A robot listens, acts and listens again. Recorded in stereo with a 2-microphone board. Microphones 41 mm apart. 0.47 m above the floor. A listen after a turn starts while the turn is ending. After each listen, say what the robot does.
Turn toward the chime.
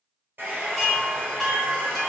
Turn 30° left.
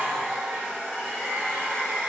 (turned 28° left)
Keep listening.
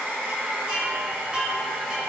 Turn 25° right.
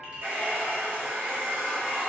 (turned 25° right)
Keep listening.
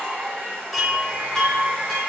Facing the chime.